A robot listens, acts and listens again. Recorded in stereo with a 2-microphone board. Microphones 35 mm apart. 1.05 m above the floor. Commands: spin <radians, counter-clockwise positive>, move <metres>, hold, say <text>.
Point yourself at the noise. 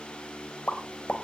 spin 0.79
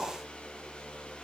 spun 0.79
hold
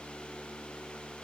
say I heard a pop, but can't make it out now. It was about straight ahead or 90° left.